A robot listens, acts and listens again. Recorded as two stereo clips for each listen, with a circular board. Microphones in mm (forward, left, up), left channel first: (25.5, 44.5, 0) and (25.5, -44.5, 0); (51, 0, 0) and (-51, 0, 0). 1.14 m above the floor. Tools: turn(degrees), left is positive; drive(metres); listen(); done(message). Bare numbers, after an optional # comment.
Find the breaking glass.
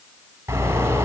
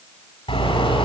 listen()
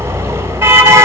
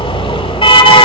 listen()
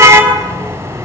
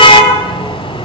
done("I can't make out breaking glass to turn to.")